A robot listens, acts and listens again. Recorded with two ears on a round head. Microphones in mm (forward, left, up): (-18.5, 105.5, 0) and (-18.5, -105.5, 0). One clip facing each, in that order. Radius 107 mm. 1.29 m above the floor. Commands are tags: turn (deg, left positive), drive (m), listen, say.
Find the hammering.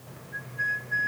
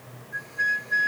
<listen/>
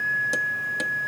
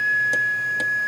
<listen/>
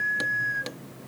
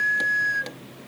<turn deg="30"/>
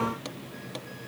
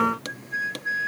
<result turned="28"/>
<listen/>
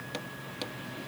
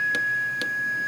<listen/>
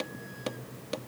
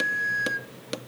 <turn deg="-25"/>
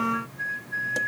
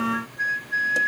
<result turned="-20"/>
<listen/>
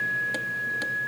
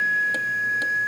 <listen/>
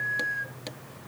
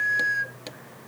<say>Facing where the hammering came from. I can't hear it now.</say>